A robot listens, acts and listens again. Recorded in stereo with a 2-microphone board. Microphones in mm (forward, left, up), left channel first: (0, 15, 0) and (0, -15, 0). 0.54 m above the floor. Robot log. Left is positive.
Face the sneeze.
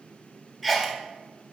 cmd yaw +30
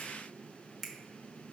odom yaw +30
cmd idle
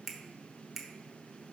end: I heard a sneeze, but can't make it out now. It was about 30° right or 150° left.